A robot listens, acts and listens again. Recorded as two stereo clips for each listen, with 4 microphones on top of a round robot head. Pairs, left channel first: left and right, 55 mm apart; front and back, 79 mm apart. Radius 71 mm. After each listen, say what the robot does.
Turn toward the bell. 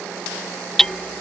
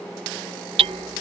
Keep listening.
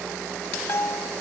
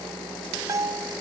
Turn 130° left.
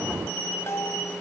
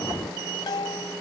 Turn 40° left.
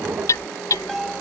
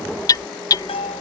Found it: a bell, straight ahead.